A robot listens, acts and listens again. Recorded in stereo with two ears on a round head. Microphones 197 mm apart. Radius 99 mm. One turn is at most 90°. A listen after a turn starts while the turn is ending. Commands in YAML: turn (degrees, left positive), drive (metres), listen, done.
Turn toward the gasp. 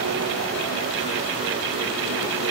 listen: true
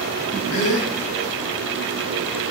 turn: 65
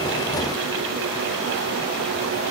listen: true
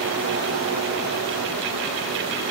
done: "I heard a gasp, but can't make it out now. It was about straight ahead or 50° left."